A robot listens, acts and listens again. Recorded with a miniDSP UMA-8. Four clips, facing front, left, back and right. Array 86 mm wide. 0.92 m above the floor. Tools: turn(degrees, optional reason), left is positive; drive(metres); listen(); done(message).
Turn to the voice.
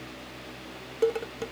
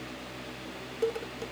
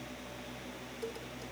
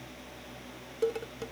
listen()
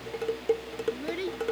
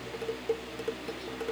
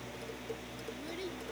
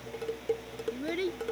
turn(degrees=-55, reason="The child speaking: 55° right.")
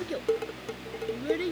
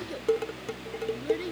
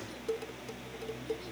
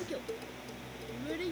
done("Found it: a child speaking, straight ahead.")